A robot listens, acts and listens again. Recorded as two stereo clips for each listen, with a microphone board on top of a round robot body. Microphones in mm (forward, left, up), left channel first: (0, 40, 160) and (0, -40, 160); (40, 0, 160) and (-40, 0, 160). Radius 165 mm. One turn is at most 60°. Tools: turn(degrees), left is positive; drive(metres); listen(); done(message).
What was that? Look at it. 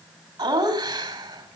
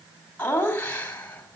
turn(degrees=-60)
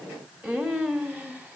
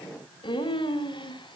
turn(degrees=-15)
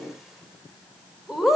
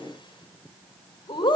done("Found it: laughter, straight ahead, 2 to 4 m away.")